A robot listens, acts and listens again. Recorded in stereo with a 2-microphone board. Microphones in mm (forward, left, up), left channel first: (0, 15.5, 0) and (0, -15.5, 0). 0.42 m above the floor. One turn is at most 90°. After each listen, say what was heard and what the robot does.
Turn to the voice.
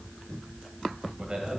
The man speaking: about 30° right or 150° right. Turn 30° right.
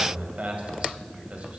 So it is at 115° right. Turn 90° right.
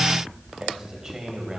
The man speaking is now 25° right. Turn 25° right.
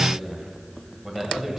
The man speaking is now 10° right. Turn 10° right.
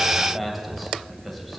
Found it: a man speaking, straight ahead.